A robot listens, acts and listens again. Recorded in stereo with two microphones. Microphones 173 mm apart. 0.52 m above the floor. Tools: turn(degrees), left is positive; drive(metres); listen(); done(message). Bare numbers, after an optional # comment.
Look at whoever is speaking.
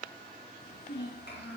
# The child speaking: about 70° left or 110° left.
turn(70)
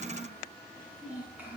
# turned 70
# So it is at 10° right.
turn(-10)
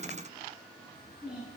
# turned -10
done("Facing the child speaking.")